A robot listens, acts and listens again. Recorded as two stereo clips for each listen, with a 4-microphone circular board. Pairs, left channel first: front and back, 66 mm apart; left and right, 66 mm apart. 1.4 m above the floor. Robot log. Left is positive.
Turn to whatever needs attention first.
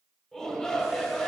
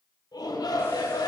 note: The shout: 85° left.
cmd yaw +85
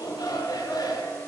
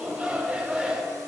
note: The shout is now 15° right.
cmd yaw -15
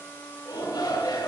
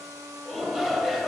end: Facing the shout.